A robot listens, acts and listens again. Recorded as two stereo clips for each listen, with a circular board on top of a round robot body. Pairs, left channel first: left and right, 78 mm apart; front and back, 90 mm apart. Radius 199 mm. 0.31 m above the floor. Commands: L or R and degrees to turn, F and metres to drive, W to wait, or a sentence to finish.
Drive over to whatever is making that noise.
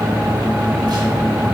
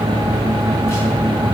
W
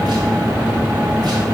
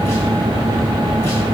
W
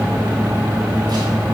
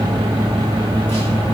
I can't make out anything.